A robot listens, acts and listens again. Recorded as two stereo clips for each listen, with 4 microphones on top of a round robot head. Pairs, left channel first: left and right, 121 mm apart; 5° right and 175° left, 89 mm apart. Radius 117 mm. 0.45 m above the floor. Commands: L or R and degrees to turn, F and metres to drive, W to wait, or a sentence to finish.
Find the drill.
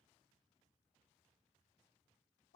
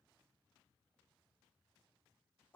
W
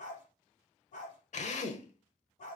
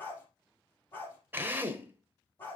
L110
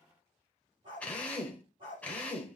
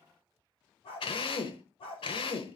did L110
L10
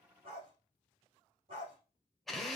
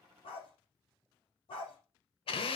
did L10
Facing the drill, 1 to 2 m away.